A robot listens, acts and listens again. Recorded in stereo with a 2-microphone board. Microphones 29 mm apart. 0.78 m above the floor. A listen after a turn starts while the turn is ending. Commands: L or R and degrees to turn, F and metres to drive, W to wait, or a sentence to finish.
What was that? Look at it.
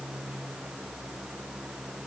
W
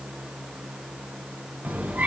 R60
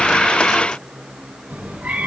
R55
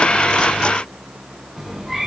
R15
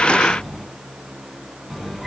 Facing the cat meowing, 2 to 4 m away.